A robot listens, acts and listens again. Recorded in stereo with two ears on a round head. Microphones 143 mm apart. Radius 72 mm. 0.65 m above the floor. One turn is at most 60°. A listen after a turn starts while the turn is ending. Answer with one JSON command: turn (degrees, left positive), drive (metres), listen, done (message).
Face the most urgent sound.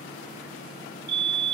{"turn": -60}
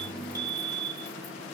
{"turn": -25}
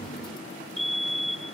{"done": "Facing the fire alarm."}